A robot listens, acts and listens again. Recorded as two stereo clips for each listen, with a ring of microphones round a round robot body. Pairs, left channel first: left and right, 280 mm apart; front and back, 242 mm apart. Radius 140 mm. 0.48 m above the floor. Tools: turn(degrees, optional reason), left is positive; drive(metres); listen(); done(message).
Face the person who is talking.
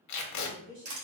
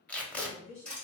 turn(degrees=-45, reason="The woman speaking: 45° right.")
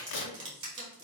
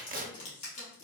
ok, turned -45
listen()
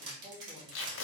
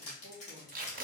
listen()
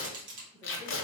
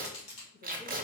done("Facing where the woman speaking came from. I can't hear it now.")